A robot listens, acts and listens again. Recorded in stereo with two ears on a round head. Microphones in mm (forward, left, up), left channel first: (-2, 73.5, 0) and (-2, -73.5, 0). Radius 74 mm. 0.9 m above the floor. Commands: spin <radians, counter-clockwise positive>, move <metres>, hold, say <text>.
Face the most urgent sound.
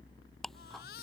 spin 1.22
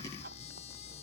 hold
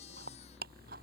hold
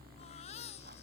spin 0.70
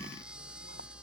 say Found it: a baby crying, straight ahead.